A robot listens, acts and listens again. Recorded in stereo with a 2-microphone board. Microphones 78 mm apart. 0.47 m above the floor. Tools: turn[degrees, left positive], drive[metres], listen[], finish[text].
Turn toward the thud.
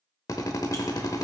Action: listen[]
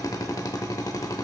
Action: listen[]
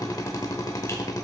Action: finish[I can't make out a thud, only a drill.]